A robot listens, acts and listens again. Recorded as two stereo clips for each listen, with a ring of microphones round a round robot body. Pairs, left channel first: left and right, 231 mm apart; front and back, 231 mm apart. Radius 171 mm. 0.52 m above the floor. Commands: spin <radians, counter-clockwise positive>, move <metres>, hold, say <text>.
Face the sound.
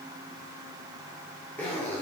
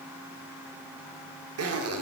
spin 3.05
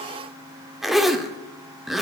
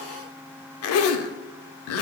say Found it: a zipper, straight ahead.